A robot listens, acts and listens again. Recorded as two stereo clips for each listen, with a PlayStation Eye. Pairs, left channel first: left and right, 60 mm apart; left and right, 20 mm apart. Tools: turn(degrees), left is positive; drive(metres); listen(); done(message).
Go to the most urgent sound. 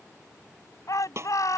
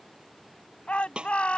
turn(degrees=65)
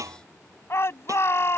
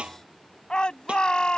turn(degrees=45)
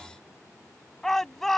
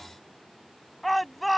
drive(metres=1.0)
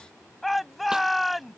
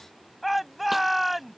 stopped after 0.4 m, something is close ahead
done("Blocked. The shout is further on, straight ahead.")